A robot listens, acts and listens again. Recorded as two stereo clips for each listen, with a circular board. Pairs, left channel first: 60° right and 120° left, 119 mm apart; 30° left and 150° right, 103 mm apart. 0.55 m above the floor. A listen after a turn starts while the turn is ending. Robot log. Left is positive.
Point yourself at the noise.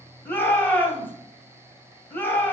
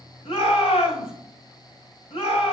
note: The shout: 15° left.
cmd yaw +15
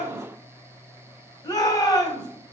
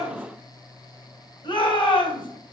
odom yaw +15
end: Facing the shout.